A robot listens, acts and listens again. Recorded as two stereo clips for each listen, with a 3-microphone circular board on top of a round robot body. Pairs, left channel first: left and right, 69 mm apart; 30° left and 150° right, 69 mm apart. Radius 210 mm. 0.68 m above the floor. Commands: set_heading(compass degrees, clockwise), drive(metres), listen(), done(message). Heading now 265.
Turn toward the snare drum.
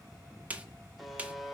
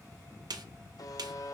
set_heading(65)
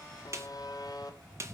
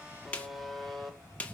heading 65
set_heading(105)
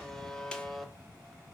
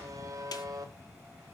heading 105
listen()
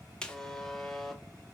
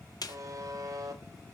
set_heading(90)
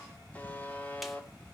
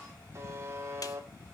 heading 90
listen()
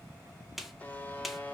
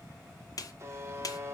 done("Facing the snare drum.")